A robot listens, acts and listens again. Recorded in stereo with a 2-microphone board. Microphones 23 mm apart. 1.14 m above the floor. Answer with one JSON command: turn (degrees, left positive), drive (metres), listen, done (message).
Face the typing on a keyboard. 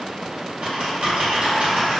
{"turn": -90}
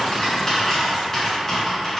{"turn": 15}
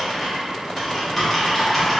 {"done": "Facing the typing on a keyboard, 1 to 2 m away."}